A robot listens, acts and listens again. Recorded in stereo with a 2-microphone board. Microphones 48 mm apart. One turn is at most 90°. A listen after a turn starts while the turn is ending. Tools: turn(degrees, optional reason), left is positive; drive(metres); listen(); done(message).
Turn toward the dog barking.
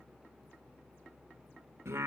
listen()
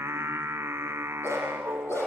turn(degrees=65, reason="The dog barking: about 65° left or 115° left.")
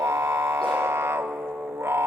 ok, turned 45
listen()
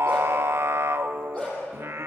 turn(degrees=20, reason="So it is at 20° left.")
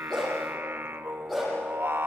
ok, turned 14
done("Found it: a dog barking, straight ahead.")